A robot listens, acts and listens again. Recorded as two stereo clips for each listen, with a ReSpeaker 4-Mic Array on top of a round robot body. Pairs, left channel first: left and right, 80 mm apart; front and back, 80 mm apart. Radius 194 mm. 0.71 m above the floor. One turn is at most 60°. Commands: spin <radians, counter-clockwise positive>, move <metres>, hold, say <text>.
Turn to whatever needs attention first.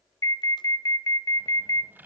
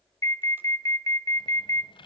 spin 0.79
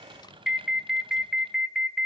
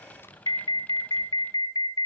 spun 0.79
say Facing the alarm, 2 to 4 m away.